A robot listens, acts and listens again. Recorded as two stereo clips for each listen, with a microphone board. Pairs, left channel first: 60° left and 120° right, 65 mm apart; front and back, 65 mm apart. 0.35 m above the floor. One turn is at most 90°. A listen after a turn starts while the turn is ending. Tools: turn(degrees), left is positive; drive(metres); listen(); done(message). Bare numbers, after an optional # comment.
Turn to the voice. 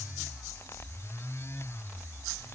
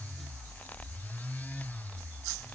listen()
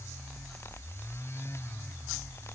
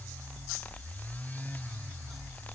listen()
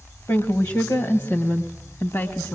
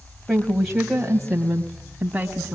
# The woman speaking: 105° left.
turn(90)
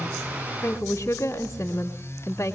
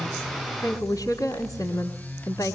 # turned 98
done("Facing the woman speaking.")